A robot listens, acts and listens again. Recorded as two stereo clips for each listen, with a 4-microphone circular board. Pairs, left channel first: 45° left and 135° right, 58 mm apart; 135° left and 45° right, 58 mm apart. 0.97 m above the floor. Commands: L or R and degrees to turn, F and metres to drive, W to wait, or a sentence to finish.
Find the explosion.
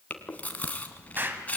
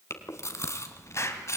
L170
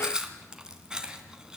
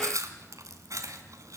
Facing where the explosion came from. I can't hear it now.